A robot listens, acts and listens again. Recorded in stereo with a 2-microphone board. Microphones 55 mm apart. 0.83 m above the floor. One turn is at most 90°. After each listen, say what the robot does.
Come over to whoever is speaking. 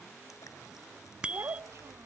Turn 65° right.
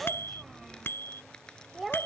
Drive 1.0 m forward.
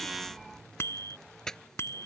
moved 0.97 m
Keep listening.
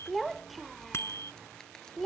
Drive 1.0 m forward.
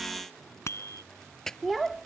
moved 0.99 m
Drive 1.0 m forward.
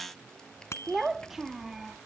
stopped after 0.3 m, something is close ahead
I am next to the child speaking.